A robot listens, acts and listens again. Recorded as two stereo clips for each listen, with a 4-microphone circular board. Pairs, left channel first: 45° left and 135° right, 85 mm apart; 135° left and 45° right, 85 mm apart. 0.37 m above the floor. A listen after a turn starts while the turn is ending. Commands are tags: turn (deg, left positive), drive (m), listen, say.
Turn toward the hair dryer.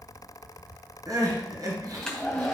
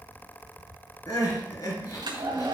<turn deg="-35"/>
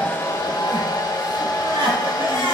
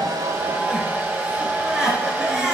<turn deg="20"/>
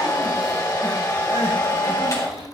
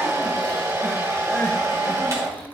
<say>Facing the hair dryer, 2 to 4 m away.</say>